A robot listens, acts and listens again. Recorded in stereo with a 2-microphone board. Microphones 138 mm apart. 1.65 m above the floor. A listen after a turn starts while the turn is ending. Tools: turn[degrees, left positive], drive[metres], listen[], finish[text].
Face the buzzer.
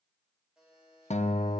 Action: turn[-30]
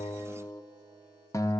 Action: listen[]
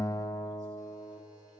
Action: listen[]
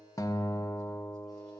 Action: finish[I heard a buzzer, but can't make it out now. It was about 25° left or 145° right.]